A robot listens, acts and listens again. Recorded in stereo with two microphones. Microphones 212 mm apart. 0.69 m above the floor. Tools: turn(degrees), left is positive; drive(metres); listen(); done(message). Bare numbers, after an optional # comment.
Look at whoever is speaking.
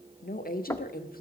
# The woman speaking: about 45° left or 135° left.
turn(45)
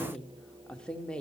done("Found it: a woman speaking, straight ahead, 1 to 2 m away.")